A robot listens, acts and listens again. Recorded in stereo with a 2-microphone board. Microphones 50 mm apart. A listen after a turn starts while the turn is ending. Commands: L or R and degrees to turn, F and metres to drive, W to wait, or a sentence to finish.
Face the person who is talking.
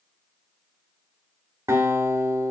W
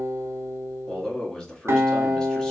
L30
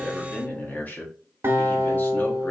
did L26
L140
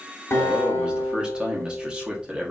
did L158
R15
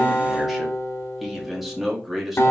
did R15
Facing the man speaking.